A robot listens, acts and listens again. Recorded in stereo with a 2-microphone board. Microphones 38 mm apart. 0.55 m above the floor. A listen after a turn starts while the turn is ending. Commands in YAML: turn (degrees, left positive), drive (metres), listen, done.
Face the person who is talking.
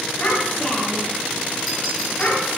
turn: 35
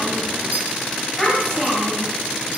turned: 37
done: "Found it: a child speaking, straight ahead."